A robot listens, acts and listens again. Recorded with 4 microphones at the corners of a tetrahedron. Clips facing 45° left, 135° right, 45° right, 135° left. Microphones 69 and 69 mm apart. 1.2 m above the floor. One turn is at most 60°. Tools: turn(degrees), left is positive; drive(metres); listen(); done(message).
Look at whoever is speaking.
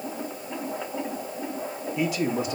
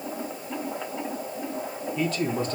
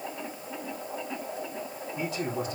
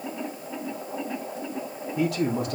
turn(degrees=60)
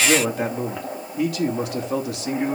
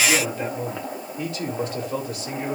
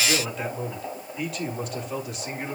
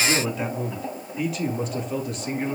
turn(degrees=40)
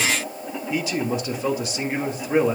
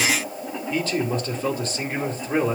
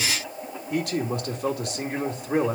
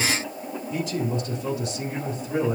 turn(degrees=-35)
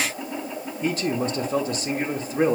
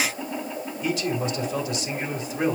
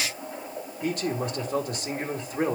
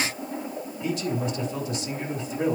done("Facing the man speaking, 2 to 4 m away.")